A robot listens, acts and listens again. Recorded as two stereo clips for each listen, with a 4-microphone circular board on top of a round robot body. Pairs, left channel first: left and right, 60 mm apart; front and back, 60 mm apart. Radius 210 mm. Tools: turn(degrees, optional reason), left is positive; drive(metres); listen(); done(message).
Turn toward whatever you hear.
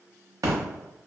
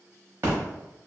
turn(degrees=-125, reason="The splash: 125° right.")
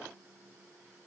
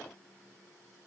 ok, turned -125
done("I heard a splash from this way, but can't make it out now.")